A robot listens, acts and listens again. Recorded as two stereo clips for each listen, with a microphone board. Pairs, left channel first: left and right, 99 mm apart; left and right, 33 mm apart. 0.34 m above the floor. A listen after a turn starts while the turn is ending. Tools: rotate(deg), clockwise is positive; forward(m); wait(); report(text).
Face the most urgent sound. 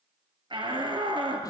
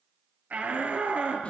rotate(55)
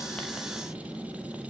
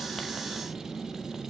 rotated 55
wait()
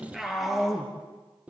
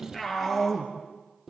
report("Facing the shout, over 4 m away.")